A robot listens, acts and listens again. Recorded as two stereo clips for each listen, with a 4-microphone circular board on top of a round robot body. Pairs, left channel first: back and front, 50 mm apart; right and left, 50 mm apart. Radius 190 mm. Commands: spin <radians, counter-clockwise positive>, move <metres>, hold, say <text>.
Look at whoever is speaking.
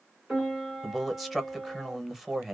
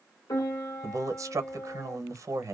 spin 1.48
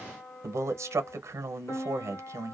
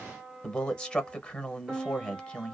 spin -0.35
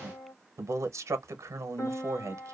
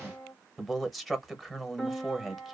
say Found it: a man speaking, straight ahead, under 1 m away.